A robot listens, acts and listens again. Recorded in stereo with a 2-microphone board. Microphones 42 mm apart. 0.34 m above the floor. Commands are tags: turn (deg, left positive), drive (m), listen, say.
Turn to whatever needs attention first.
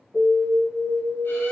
<turn deg="-45"/>
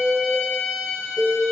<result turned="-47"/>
<say>Facing the alarm, 1 to 2 m away.</say>